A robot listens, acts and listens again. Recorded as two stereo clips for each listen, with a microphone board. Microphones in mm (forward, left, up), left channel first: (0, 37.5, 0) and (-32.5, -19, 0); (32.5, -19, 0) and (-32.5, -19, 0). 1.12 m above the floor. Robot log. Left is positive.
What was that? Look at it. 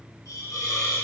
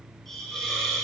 note: The hiss: 80° left.
cmd yaw +80
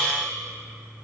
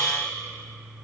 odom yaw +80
note: The hiss is now 15° right.
cmd yaw -15
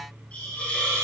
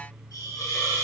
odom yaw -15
end: Facing the hiss.